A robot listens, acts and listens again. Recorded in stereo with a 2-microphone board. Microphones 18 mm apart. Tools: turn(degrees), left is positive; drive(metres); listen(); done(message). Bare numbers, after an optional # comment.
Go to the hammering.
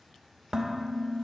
listen()
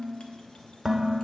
listen()
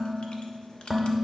done("I can't make out hammering, only dishes clattering.")